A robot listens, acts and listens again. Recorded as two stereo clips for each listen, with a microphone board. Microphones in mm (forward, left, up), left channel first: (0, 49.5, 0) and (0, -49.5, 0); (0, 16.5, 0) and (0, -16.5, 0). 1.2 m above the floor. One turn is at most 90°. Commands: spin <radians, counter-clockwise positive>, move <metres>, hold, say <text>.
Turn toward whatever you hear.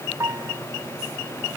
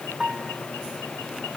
spin -0.52
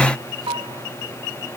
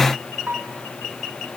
spin -1.57
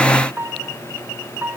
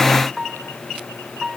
spin -0.35
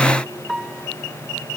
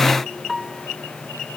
say Facing the piano.